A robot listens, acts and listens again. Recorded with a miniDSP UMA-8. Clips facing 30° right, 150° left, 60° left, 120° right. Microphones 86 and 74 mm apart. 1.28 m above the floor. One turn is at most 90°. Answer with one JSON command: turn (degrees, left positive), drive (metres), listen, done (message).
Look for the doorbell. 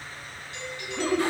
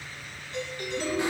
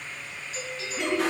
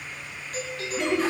{"turn": -90}
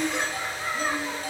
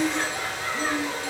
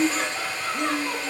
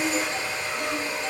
{"turn": -70}
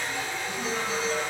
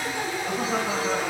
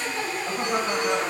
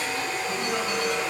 {"listen": true}
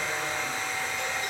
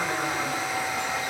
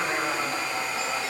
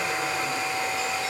{"done": "Facing where the doorbell came from. I can't hear it now."}